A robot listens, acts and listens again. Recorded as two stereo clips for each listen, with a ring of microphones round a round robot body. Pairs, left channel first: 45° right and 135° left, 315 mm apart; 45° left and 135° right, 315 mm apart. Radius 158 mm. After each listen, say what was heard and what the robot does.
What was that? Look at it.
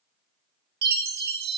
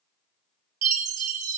The chime: 170° right. Turn 170° right.
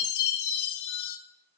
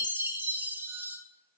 The chime is now 55° right. Turn 55° right.
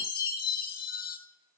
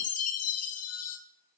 The chime is now 10° left. Turn 10° left.
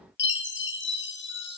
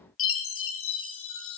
Facing the chime, 1 to 2 m away.